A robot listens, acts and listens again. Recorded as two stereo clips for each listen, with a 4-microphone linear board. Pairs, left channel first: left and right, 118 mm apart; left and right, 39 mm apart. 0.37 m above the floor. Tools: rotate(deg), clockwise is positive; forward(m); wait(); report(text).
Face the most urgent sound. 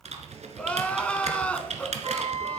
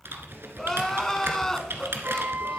rotate(-30)
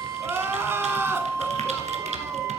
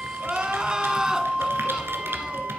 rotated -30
rotate(20)
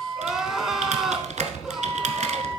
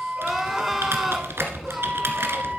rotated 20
report("Found it: crying, straight ahead, under 1 m away.")